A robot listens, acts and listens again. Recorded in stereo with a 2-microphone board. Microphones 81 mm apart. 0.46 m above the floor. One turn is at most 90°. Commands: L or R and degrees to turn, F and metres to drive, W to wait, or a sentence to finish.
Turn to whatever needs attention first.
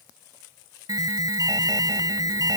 R50
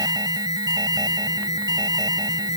R70
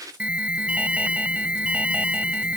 R20
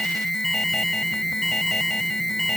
Facing the alarm.